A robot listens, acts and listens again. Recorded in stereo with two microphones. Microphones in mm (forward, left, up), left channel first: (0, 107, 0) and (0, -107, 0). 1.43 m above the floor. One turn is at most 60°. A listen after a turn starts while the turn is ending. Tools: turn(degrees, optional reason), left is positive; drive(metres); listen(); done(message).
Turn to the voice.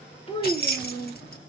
turn(degrees=25, reason="The child speaking: about 25° left or 155° left.")
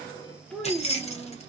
done("Facing the child speaking, under 1 m away.")